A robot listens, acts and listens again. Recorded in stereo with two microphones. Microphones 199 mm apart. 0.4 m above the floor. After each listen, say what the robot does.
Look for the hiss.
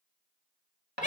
Keep listening.
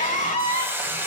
Turn 30° right.
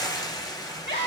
Turn 20° left.
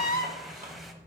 Keep listening.
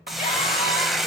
Found it: a hiss, straight ahead.